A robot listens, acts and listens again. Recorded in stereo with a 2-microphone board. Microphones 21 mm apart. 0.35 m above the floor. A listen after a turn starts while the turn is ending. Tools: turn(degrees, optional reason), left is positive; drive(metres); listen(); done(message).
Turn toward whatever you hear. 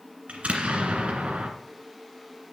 turn(degrees=-90)
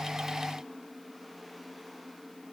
done("Facing where the explosion came from. I can't hear it now.")